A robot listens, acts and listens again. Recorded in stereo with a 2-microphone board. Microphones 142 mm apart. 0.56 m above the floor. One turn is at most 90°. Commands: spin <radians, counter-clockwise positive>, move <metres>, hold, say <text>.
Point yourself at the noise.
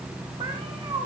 spin -0.61
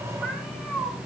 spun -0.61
say Facing the cat meowing.